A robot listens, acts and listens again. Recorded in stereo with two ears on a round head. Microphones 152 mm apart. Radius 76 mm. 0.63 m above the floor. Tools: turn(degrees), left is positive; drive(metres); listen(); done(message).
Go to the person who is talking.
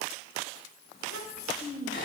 turn(degrees=55)
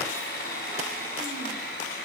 listen()
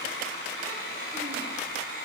listen()
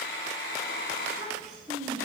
drive(metres=1.0)
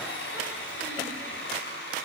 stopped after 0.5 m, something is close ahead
listen()
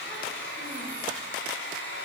listen()
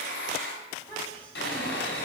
turn(degrees=10)
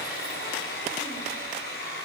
listen()
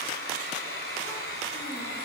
listen()
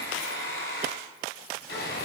done("Facing where the child speaking came from. I can't hear it now. I did not reach it.")